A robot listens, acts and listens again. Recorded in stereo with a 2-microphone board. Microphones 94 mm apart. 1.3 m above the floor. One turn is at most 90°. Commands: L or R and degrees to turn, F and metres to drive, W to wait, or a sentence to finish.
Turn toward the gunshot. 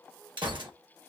R60
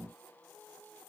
W
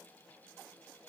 I heard a gunshot, but can't make it out now. It was about straight ahead or 60° right.